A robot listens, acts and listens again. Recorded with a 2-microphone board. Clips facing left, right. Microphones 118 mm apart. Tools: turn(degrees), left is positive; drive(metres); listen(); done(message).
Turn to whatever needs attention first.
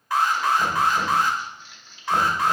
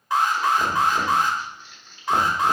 turn(degrees=-20)
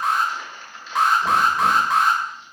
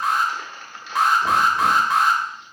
done("Facing the alarm, under 1 m away.")